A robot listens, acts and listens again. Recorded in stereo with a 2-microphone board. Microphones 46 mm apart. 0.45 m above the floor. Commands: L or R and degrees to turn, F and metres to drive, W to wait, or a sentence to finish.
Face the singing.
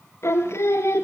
L90
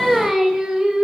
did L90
R15
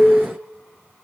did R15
Facing the singing.